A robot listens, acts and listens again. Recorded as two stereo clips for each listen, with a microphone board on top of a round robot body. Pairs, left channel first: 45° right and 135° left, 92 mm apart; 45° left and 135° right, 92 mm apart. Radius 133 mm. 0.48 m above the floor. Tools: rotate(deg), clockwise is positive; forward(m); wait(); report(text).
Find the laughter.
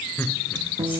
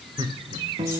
rotate(115)
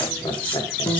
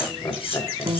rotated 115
rotate(10)
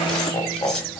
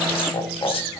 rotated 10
report("Facing the laughter.")